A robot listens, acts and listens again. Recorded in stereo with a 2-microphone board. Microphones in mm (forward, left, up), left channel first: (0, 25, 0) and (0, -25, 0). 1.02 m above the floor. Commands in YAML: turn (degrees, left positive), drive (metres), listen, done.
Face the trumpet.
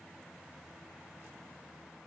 listen: true
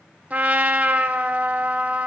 turn: -30
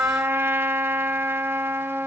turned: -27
turn: -115
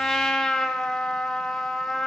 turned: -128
turn: 15
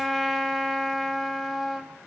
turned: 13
done: "Found it: a trumpet, straight ahead."